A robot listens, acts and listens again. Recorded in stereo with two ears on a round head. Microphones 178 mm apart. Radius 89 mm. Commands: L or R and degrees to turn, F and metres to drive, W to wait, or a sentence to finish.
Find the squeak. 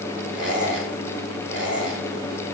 R30
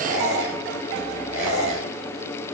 R145
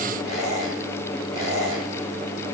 Facing the squeak, 2 to 4 m away.